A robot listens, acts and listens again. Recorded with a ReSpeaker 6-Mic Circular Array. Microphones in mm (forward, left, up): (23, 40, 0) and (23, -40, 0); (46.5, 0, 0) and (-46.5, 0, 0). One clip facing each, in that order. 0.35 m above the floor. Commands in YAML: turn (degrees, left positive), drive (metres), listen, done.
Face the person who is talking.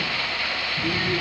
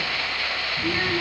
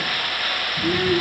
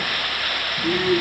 turn: -30
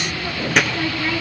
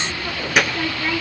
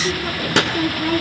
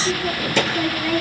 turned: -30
done: "Found it: a child speaking, straight ahead."